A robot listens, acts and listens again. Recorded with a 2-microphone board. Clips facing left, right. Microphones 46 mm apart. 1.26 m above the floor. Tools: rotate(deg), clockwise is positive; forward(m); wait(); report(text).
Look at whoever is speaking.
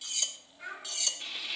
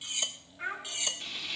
rotate(40)
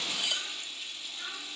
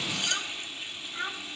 rotate(100)
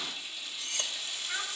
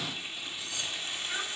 report("Facing the child speaking, 2 to 4 m away.")